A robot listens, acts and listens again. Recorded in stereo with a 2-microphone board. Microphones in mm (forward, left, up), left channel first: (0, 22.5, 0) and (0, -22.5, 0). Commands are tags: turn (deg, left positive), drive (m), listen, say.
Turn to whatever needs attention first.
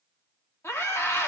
<turn deg="90"/>
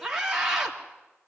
<turn deg="-10"/>
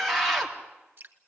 <say>Found it: a scream, straight ahead.</say>